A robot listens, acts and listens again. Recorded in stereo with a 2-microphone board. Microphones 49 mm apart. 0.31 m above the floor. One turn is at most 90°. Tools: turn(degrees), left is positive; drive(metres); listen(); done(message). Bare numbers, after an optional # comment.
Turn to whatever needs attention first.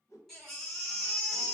turn(30)
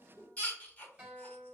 # So it is at 145° left.
turn(90)
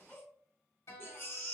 # The baby crying is now 55° left.
turn(55)
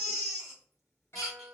done("Found it: a baby crying, straight ahead.")